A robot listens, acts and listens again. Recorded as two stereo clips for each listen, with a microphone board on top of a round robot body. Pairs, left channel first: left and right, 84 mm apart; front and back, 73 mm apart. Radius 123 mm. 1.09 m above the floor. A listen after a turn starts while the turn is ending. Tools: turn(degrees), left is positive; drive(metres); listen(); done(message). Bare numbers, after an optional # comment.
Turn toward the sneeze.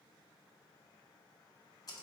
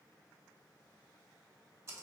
listen()
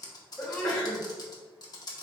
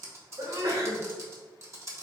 # The sneeze: 175° left.
turn(175)
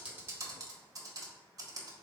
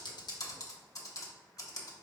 done("Facing where the sneeze came from. I can't hear it now.")